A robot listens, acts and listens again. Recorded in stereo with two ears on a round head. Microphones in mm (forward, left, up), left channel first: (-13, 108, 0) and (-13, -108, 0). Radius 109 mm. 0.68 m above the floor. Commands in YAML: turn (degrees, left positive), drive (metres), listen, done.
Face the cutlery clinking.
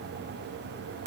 listen: true
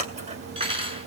turn: -20
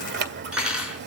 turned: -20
done: "Found it: cutlery clinking, straight ahead, over 4 m away."